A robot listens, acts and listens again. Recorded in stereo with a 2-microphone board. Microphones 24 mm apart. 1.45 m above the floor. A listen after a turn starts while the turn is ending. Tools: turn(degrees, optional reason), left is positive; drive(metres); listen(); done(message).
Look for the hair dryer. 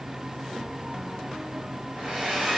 turn(degrees=-40, reason="The hair dryer: about 40° right or 140° right.")
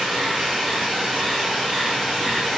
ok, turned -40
done("Facing the hair dryer, 1 to 2 m away.")